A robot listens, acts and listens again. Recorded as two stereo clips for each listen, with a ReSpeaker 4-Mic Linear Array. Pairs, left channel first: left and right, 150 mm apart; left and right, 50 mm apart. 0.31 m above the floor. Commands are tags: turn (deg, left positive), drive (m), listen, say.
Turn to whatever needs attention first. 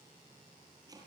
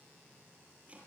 <listen/>
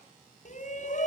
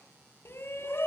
<turn deg="55"/>
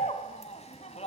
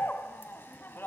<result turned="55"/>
<turn deg="55"/>
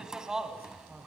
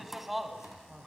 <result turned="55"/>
<say>Found it: a shout, straight ahead.</say>